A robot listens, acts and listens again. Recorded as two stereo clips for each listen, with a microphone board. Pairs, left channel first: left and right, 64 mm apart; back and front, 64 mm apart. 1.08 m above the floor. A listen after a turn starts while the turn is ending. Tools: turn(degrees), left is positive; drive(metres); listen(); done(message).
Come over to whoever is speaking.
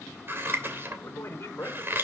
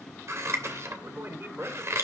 turn(degrees=45)
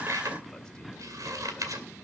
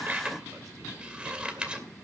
listen()
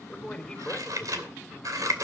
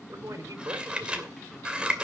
turn(degrees=10)
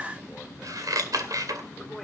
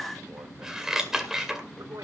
listen()
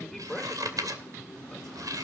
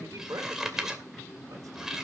drive(metres=1.0)
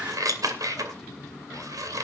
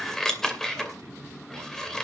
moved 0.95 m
listen()
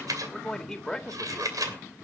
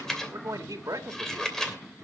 drive(metres=1.0)
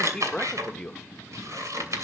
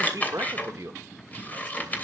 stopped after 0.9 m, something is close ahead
turn(degrees=10)
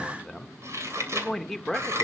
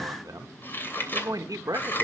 done("Arrived at the man speaking, straight ahead.")